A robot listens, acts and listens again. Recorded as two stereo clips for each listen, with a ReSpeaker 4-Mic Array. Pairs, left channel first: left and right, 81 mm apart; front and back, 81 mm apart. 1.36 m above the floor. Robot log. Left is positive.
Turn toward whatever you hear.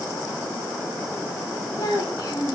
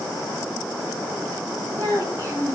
note: The child speaking: 125° left.
cmd yaw +125
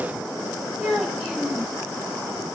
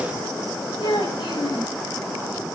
note: The child speaking is now 10° right.
cmd yaw -10
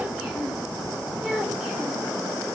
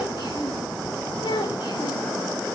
end: Facing the child speaking, over 4 m away.